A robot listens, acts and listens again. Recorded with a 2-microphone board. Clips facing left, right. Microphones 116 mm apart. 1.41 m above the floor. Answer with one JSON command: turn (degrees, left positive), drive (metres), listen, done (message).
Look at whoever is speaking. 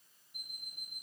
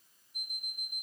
{"listen": true}
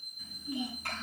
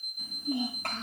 {"turn": -90}
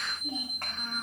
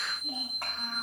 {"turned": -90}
{"done": "Facing the child speaking."}